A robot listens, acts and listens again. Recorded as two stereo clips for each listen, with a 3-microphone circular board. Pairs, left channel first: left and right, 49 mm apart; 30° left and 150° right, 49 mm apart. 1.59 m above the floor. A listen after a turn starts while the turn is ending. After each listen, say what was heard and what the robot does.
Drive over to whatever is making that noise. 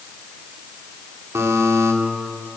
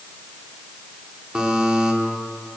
The buzzer: 75° right. Turn 75° right.
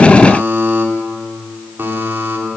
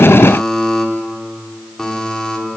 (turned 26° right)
The buzzer is now 50° right. Turn 50° right.
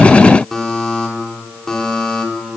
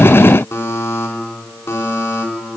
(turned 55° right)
Drive 1.0 m forward.
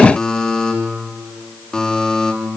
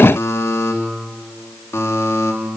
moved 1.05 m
The buzzer is now 10° left. Turn 10° left.
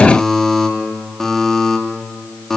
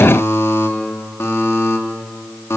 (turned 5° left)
Drive 1.0 m forward.
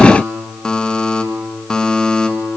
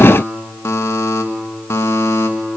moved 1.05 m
The buzzer is now 15° left. Turn 15° left.
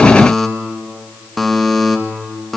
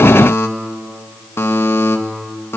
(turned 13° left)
Drive 1.0 m forward.
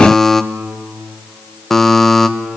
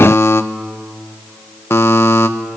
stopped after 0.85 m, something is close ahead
Arrived at the buzzer, straight ahead.